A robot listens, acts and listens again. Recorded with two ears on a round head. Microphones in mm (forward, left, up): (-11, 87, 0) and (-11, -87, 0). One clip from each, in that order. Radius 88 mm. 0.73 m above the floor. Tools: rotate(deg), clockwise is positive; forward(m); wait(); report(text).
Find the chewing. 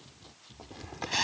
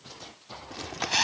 rotate(50)
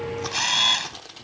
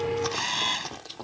report("Facing the chewing.")